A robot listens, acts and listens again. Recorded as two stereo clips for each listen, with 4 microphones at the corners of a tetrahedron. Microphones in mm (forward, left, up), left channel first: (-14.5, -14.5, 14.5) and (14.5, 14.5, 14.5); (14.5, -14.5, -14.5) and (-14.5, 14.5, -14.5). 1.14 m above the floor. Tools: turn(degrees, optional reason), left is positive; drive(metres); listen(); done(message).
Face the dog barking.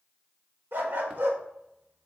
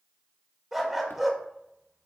turn(degrees=55, reason="The dog barking: 55° left.")
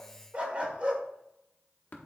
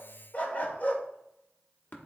done("Found it: a dog barking, straight ahead, 1 to 2 m away.")